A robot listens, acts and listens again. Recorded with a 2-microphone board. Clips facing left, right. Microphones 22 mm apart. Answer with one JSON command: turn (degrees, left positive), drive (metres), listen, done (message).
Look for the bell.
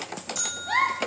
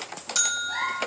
{"turn": -55}
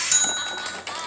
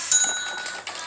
{"done": "Found it: a bell, straight ahead."}